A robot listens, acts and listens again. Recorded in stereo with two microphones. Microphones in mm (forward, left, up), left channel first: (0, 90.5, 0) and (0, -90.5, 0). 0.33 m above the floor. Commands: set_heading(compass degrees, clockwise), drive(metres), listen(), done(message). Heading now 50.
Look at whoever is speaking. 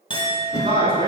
set_heading(80)
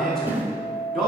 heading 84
done("Found it: a man speaking, straight ahead.")